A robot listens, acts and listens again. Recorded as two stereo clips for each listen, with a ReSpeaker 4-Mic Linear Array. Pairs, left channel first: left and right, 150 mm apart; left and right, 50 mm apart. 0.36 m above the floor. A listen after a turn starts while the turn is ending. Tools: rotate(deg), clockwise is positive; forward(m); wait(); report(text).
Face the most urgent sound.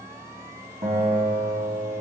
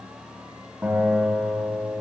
wait()
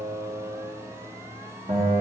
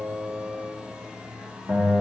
wait()
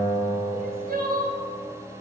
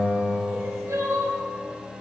rotate(90)
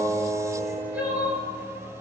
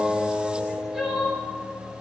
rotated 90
rotate(10)
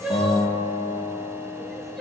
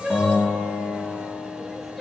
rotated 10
report("Facing the crying.")